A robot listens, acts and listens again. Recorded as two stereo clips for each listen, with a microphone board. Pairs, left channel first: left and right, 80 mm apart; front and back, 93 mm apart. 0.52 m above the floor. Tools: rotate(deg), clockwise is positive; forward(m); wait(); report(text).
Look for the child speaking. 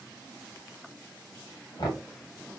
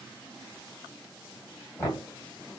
wait()
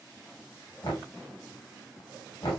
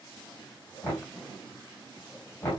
wait()
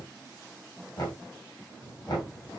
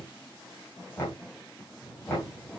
rotate(-95)
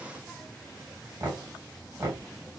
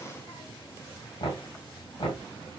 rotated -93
report("Found it: a child speaking, straight ahead, 2 to 4 m away.")